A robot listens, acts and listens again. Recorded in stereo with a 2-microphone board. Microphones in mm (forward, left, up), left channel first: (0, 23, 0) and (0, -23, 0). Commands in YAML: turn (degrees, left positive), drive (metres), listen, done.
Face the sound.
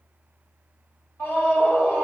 turn: 55
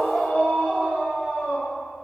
turn: 25
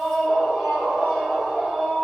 done: "Found it: a scream, straight ahead."